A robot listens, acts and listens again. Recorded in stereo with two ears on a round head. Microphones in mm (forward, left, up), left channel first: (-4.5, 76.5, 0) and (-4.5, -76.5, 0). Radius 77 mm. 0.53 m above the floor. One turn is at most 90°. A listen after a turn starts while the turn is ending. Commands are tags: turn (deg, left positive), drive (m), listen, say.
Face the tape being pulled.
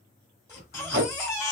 <turn deg="-60"/>
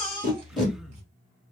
<say>Found it: tape being pulled, straight ahead, 2 to 4 m away.</say>